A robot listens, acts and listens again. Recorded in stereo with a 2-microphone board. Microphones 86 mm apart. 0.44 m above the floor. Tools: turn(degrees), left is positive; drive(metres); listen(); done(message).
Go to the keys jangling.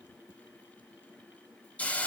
listen()
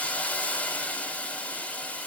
listen()
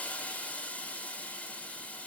done("I can't make out keys jangling to turn to.")